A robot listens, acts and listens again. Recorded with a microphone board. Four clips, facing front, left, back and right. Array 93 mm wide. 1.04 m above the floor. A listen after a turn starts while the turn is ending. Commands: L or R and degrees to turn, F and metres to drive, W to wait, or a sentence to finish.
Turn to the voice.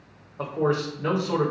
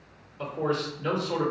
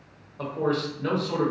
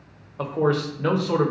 R75
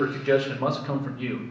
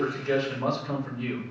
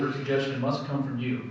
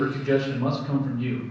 Found it: a man speaking, straight ahead, 1 to 2 m away.